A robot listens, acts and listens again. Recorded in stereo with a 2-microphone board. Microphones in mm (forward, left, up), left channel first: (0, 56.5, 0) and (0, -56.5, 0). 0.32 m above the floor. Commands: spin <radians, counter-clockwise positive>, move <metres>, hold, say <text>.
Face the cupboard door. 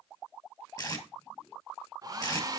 hold
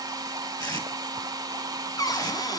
spin 0.61
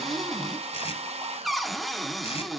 say Facing the cupboard door, 1 to 2 m away.